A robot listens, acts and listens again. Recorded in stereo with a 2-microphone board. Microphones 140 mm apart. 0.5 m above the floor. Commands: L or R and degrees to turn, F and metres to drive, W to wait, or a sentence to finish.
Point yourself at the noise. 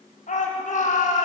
L70
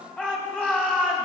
L10
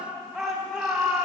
Found it: a shout, straight ahead, 2 to 4 m away.